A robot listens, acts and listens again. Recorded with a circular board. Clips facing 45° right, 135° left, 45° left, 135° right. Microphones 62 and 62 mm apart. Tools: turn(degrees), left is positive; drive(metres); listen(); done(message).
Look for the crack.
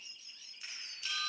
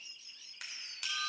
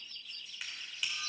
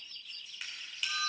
turn(degrees=135)
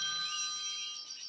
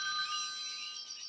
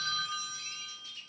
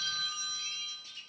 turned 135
done("Facing where the crack came from. I can't hear it now.")